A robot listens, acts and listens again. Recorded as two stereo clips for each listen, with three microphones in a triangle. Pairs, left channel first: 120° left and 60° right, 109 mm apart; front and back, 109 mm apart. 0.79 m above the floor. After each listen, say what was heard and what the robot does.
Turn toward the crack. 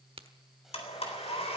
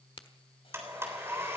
The crack: 35° right. Turn 35° right.
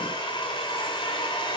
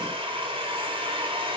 Facing where the crack came from. I can't hear it now.